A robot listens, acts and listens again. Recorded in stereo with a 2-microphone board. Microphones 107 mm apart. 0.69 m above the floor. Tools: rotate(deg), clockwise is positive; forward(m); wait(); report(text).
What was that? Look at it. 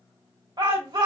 rotate(50)
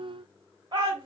rotate(60)
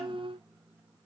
wait()
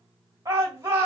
rotate(35)
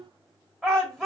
report("Found it: a shout, straight ahead.")